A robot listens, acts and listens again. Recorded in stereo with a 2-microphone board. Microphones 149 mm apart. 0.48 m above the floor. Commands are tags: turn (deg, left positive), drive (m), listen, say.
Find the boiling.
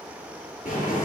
<turn deg="65"/>
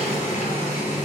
<turn deg="50"/>
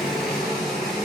<say>Facing the boiling, 2 to 4 m away.</say>